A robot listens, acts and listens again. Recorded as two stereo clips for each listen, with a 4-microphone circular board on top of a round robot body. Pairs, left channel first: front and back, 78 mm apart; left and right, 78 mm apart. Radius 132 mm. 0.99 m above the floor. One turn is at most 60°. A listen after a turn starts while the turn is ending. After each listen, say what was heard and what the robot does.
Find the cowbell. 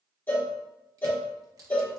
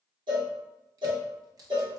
The cowbell: 65° right. Turn 60° right.
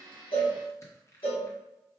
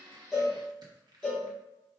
The cowbell is now 10° left. Turn 10° left.
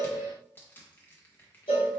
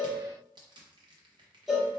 Found it: a cowbell, straight ahead, 1 to 2 m away.